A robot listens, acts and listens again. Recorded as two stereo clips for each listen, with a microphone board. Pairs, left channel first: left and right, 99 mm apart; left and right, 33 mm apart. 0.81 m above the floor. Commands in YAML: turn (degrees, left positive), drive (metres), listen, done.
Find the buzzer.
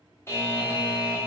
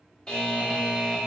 turn: 25
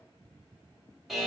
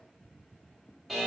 done: "Found it: a buzzer, straight ahead."